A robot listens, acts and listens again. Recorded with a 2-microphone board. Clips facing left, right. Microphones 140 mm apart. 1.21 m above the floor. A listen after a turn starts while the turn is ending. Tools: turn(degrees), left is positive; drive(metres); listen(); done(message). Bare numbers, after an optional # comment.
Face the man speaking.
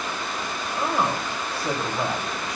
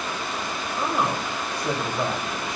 turn(30)
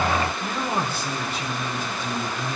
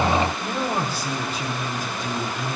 # So it is at 50° right.
turn(-50)
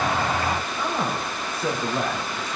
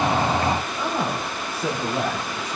# The man speaking is now 10° right.
turn(-10)
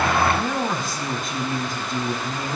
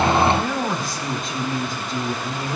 done("Facing the man speaking.")